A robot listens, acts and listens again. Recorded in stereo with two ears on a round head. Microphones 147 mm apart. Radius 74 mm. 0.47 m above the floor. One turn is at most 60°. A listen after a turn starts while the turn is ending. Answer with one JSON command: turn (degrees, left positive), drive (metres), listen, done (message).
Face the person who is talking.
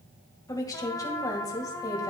{"turn": 20}
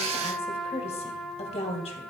{"turn": 60}
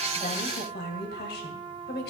{"turn": 60}
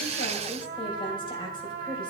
{"turn": 35}
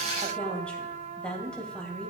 {"turn": 10}
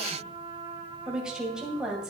{"done": "Facing the woman speaking."}